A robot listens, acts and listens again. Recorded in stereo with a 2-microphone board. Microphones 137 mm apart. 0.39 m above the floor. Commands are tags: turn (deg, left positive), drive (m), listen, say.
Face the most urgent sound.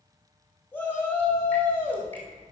<turn deg="30"/>
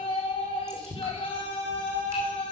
<turn deg="130"/>
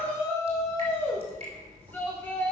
<turn deg="15"/>
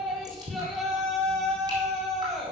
<say>Found it: a shout, straight ahead.</say>